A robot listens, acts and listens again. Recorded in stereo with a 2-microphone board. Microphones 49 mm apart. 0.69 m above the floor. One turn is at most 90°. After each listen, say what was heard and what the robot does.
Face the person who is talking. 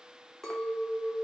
Keep listening.
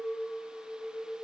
Keep listening.
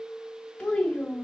The child speaking: about 15° left or 165° left. Turn 15° left.
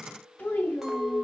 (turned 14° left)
So it is at 150° left. Turn 90° left.
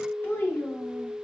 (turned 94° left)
The child speaking is now 55° left. Turn 55° left.
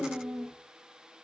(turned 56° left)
Facing the child speaking, 1 to 2 m away.